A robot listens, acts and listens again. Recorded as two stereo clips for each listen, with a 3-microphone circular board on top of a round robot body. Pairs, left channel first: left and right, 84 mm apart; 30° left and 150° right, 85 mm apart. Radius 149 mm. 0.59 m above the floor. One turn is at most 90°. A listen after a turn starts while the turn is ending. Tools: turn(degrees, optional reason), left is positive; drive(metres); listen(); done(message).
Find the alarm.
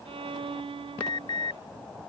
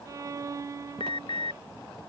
turn(degrees=55, reason="The alarm: 55° left.")
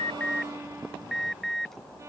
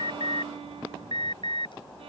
done("Facing the alarm.")